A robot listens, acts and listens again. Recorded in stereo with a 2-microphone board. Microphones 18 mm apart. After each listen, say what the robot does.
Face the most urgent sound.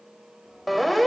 Turn 30° left.
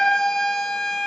Turn 140° left.
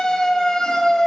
Turn 40° left.
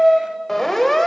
Turn 15° left.
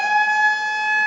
Found it: a siren, straight ahead.